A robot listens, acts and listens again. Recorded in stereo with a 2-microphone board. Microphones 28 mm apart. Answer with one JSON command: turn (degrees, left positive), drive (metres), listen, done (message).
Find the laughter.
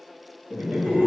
{"turn": -70}
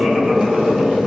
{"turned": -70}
{"listen": true}
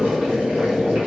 {"listen": true}
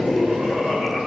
{"turn": -40}
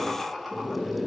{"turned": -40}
{"turn": -10}
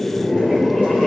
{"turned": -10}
{"listen": true}
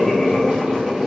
{"listen": true}
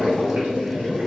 {"done": "Facing where the laughter came from. I can't hear it now."}